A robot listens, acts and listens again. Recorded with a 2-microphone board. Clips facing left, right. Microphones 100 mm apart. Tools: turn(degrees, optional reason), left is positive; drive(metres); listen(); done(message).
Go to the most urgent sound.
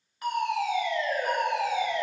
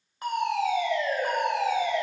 turn(degrees=-30, reason="The fire alarm: about 30° right or 150° right.")
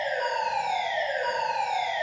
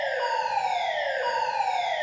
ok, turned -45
turn(degrees=-100, reason="So it is at 100° right.")
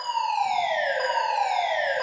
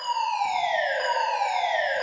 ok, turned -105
turn(degrees=10, reason="The fire alarm is now 10° left.")
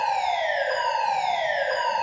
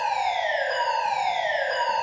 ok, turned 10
drive(metres=1.0)
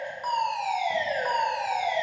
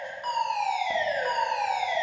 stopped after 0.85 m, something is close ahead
done("I am next to the fire alarm.")